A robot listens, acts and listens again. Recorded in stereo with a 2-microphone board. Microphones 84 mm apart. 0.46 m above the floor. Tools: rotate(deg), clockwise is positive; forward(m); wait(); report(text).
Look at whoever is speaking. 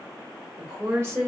rotate(25)
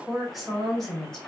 rotate(-10)
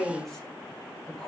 rotate(-15)
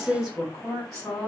report("Found it: a woman speaking, straight ahead.")